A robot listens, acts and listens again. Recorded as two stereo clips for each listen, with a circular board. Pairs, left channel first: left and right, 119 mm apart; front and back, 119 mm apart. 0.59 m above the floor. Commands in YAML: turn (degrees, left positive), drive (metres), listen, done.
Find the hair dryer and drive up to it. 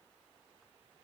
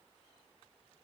listen: true
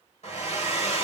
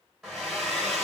turn: 95
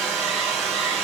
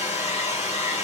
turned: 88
drive: 1.0
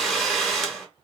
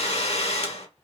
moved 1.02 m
drive: 1.0
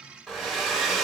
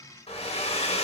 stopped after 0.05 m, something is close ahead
done: "I am next to the hair dryer."